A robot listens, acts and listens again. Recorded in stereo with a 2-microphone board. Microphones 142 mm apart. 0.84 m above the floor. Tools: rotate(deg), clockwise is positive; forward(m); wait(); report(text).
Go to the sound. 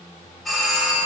rotate(-30)
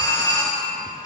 rotate(-150)
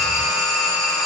forward(1.0)
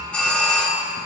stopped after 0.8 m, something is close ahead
report("I am next to the doorbell.")